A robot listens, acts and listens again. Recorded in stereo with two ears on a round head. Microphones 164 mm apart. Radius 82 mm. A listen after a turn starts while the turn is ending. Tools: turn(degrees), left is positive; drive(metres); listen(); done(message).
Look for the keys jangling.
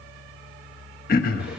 listen()
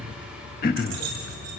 turn(degrees=-90)
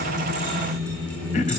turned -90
listen()
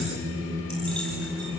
listen()
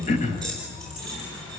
done("Found it: keys jangling, straight ahead.")